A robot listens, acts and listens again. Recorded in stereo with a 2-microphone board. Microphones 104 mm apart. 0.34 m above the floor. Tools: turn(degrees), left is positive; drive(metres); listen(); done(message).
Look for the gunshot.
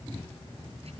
listen()
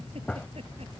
turn(degrees=30)
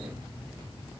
listen()
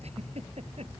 done("I heard a gunshot, but can't make it out now. It was about 20° right or 140° left.")